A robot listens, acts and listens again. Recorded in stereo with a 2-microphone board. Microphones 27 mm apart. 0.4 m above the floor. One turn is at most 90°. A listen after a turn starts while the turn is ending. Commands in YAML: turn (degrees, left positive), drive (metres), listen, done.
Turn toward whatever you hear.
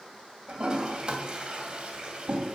turn: -35
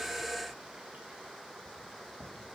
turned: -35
turn: -90
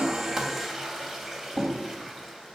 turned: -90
turn: -15
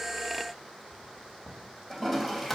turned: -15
done: "Facing the toilet flushing, 2 to 4 m away."